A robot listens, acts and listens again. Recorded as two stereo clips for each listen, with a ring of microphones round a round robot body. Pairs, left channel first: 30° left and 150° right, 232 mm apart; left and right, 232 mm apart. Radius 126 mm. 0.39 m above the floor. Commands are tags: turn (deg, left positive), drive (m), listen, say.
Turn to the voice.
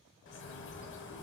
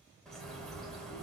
<listen/>
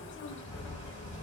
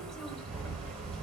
<listen/>
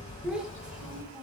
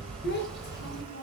<turn deg="125"/>
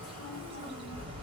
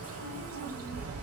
<listen/>
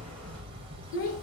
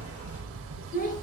<turn deg="40"/>
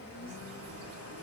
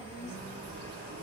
<turn deg="-10"/>
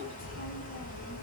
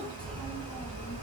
<listen/>
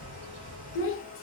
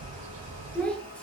<say>Facing the child speaking, under 1 m away.</say>